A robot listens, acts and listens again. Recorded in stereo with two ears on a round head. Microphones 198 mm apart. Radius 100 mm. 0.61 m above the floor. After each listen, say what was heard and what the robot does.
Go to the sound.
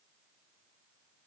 Keep listening.
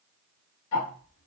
Turn 90° left.
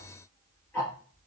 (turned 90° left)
So it is at 10° left. Turn 10° left.
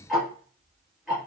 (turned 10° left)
Drive 1.0 m forward.
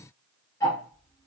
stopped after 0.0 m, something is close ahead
The ticking is now 15° left. Turn 15° left.
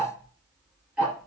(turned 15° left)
Something is in my way. I am facing the ticking but have not reached it.